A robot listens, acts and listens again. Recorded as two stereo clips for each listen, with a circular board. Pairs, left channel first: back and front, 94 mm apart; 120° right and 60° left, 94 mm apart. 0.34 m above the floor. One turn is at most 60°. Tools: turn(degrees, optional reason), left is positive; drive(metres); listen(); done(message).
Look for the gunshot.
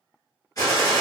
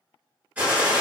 turn(degrees=60, reason="The gunshot: 135° left.")
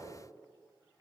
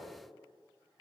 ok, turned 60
turn(degrees=60, reason="Nothing new. It was at 75° left.")
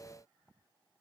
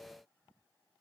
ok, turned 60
turn(degrees=15, reason="Nothing new. It was at 15° left.")
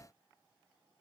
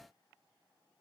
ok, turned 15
done("I heard a gunshot from this way, but can't make it out now.")